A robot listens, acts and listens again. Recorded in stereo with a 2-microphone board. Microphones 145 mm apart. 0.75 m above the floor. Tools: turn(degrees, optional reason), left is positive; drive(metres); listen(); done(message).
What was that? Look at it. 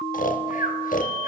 turn(degrees=70, reason="The snoring: about 70° left or 110° left.")
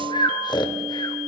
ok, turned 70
turn(degrees=35, reason="So it is at 35° left.")
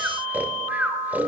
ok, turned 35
turn(degrees=-10, reason="The snoring is now 10° right.")
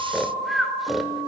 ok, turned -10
done("Found it: snoring, straight ahead.")